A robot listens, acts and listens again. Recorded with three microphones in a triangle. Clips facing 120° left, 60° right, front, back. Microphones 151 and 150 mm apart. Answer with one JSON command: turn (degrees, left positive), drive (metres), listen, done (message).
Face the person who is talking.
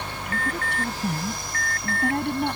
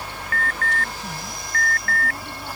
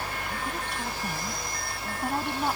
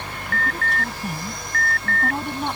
{"turn": 90}
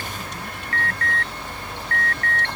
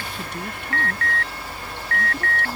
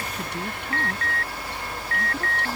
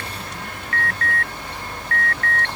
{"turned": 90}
{"listen": true}
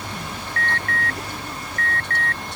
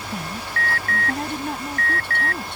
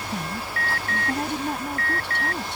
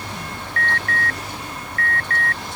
{"turn": -25}
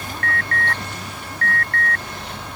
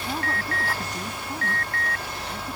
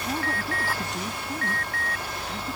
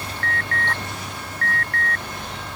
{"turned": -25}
{"listen": true}
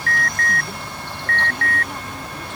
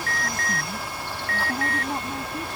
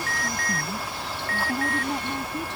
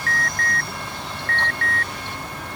{"listen": true}
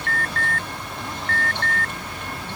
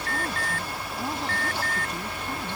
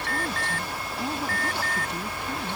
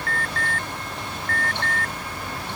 {"done": "Facing where the woman speaking came from. I can't hear it now."}